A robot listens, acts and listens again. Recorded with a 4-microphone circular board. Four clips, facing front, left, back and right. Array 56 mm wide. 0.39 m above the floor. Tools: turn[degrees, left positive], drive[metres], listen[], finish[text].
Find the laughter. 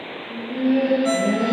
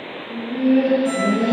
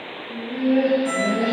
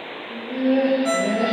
Thought: The laughter: 95° right.
Action: turn[-95]
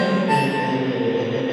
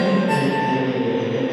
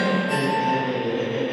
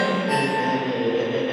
Thought: The laughter is now 60° right.
Action: turn[-60]
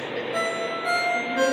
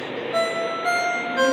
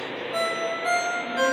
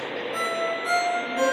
Action: listen[]
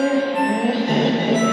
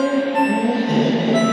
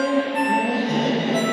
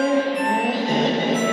Thought: The laughter is now 35° right.
Action: turn[-35]
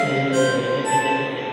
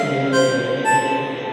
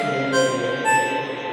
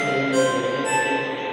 Action: finish[Found it: laughter, straight ahead, 1 to 2 m away.]